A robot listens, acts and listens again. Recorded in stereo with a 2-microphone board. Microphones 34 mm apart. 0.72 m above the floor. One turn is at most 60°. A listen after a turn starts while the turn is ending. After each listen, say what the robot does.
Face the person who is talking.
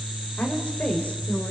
Turn 45° left.
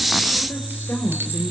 Turn 60° left.
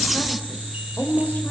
Turn 45° left.
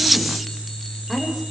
Found it: a woman speaking, straight ahead.